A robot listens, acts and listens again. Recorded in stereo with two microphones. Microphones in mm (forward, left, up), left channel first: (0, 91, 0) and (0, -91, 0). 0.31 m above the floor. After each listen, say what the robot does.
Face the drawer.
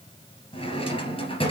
Turn 30° left.
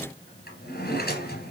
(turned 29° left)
Turn 120° left.
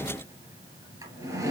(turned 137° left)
Turn 15° right.
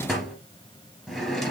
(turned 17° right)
Facing the drawer, 2 to 4 m away.